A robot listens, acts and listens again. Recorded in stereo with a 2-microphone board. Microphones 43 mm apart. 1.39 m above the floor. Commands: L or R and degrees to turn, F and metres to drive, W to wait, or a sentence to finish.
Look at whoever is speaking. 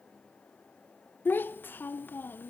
L50
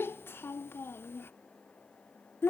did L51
L70
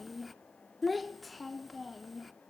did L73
Facing the child speaking.